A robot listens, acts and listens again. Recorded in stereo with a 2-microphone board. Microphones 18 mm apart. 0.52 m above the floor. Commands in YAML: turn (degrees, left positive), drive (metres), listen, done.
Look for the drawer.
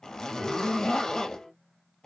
listen: true
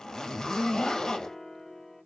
listen: true
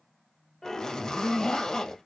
done: "I can't make out a drawer, only a zipper and a piano."